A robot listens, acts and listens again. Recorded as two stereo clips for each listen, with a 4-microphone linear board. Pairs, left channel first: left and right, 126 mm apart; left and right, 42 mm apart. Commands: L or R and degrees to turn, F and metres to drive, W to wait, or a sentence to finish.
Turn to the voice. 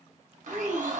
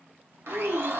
R40
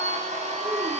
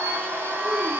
W
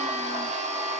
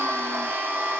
W
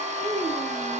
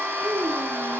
R15
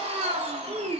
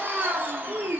Facing the child speaking.